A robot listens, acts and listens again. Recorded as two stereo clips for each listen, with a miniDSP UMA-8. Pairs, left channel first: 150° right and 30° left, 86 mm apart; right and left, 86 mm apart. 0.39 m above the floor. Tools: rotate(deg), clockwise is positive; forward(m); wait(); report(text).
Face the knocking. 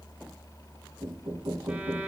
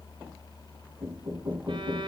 rotate(-50)
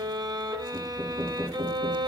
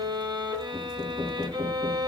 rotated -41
rotate(-10)
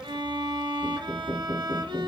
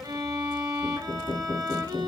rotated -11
report("Facing the knocking.")